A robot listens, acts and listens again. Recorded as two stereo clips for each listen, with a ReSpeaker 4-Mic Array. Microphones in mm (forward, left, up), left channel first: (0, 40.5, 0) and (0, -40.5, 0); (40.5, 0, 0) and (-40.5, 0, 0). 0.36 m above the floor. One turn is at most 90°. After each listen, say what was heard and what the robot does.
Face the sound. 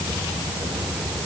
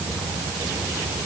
Keep listening.
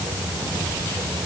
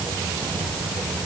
Keep listening.
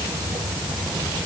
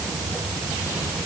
I can't make out anything.